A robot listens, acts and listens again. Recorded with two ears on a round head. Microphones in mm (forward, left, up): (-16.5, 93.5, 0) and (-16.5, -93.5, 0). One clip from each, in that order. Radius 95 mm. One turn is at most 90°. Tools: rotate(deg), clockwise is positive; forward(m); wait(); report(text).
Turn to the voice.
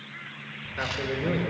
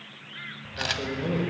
rotate(-60)
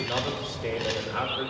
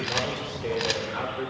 rotate(-20)
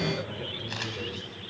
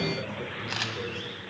wait()
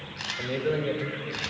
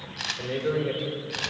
report("Found it: a man speaking, straight ahead, 1 to 2 m away.")